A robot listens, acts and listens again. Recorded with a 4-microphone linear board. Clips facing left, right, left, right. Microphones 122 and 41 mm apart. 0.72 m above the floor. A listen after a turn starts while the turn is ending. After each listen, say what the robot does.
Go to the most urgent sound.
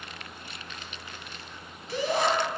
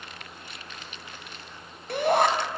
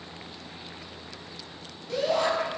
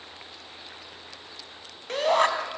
Turn 55° right.
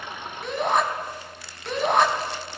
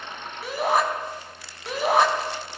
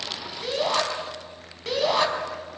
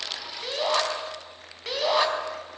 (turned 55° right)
Drive 1.0 m forward.
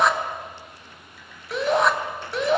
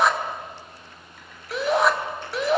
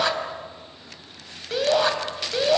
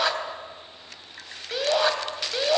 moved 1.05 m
Drive 1.0 m forward.
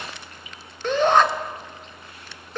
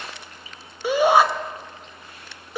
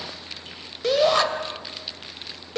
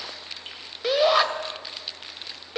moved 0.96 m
Turn 10° right.
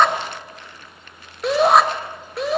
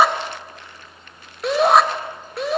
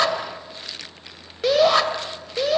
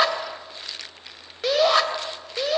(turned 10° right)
Drive 1.0 m forward.
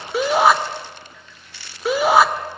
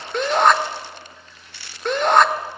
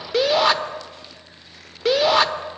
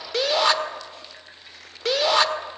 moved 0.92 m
Drive 1.0 m forward.
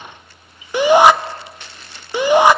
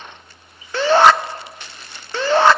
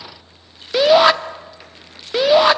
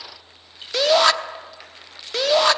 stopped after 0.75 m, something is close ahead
Turn 15° left.
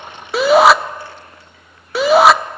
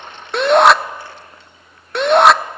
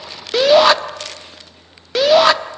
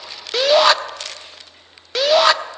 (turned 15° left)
Arrived at the shout, straight ahead.